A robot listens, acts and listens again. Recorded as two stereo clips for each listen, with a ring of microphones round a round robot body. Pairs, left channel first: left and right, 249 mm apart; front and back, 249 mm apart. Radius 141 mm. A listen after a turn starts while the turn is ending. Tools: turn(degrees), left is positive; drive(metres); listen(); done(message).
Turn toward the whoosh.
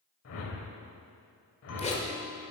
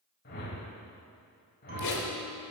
turn(degrees=60)
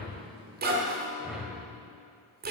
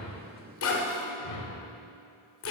done("Facing the whoosh, 1 to 2 m away.")